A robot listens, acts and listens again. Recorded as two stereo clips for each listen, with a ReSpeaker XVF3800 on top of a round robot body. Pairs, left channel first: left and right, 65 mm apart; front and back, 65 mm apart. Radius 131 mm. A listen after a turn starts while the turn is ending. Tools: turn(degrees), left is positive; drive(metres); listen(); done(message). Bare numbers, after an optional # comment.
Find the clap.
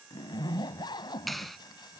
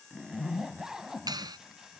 # The clap: straight behind.
turn(180)
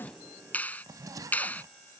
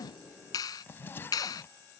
# The clap is now 25° left.
turn(25)
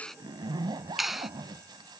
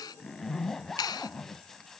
done("Found it: a clap, straight ahead.")